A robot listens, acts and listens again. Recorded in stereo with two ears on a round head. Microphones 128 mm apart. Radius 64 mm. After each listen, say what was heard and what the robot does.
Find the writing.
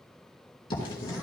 The writing: about 35° left or 145° left. Turn 35° left.
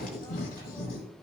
So it is at 110° left. Turn 110° left.
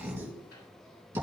The writing is now 20° right. Turn 20° right.
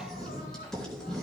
Found it: writing, straight ahead.